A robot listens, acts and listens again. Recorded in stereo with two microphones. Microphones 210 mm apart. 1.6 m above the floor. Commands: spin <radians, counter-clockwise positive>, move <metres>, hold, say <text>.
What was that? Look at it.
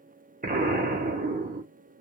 spin -0.70
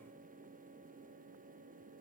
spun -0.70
hold
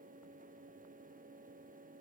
say I heard an explosion, but can't make it out now. It was about straight ahead or 100° right.